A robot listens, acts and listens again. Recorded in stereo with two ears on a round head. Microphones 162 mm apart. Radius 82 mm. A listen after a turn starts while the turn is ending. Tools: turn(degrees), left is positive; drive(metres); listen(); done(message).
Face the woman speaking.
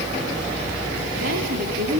turn(degrees=-60)
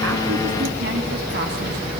listen()
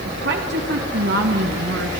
turn(degrees=-65)
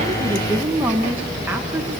turn(degrees=-10)
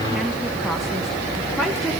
listen()
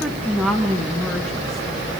done("Found it: a woman speaking, straight ahead.")